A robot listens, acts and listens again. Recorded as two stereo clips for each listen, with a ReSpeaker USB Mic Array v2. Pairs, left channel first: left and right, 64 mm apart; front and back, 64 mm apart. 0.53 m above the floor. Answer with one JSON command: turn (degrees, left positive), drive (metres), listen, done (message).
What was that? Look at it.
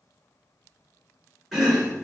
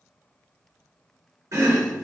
{"turn": -175}
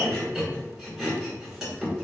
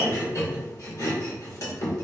{"done": "Facing the chopping."}